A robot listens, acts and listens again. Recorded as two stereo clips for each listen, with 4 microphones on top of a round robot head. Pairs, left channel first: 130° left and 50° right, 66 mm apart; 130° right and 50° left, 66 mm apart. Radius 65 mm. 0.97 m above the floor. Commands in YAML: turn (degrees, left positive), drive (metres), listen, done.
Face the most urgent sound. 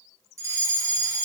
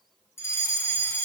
turn: -85
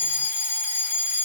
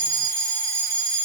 turn: 20
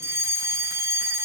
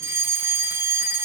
done: "Found it: a fire alarm, straight ahead."